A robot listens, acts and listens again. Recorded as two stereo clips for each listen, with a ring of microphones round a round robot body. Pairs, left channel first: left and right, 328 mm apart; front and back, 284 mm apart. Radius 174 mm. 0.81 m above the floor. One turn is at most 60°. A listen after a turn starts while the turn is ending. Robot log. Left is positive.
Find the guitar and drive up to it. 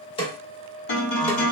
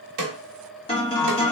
note: The guitar: 70° left.
cmd yaw +60
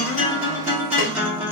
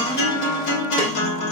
cmd fwd 1.0
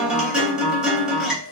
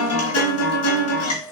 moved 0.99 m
cmd fwd 1.0
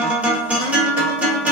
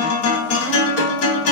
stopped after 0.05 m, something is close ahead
end: I am next to the guitar.